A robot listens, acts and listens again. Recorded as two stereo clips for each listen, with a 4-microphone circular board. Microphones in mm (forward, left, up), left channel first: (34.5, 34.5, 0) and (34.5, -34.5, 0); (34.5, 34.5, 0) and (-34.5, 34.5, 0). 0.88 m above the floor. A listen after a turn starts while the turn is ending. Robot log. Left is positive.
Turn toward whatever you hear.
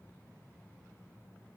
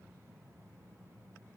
cmd idle
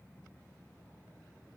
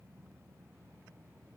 cmd idle
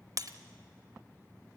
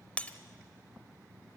note: The breaking glass: 70° right.
cmd yaw -70
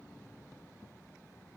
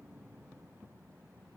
end: I heard breaking glass from this way, but can't make it out now.